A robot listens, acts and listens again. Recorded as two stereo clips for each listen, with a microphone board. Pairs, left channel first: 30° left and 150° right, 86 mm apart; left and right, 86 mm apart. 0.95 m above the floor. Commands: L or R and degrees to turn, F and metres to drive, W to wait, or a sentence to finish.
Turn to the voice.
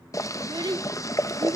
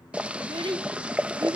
R120
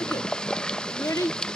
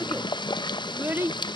R25
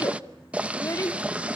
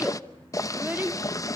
R20
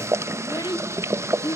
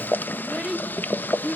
R10
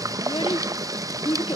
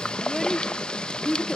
Facing the child speaking, 1 to 2 m away.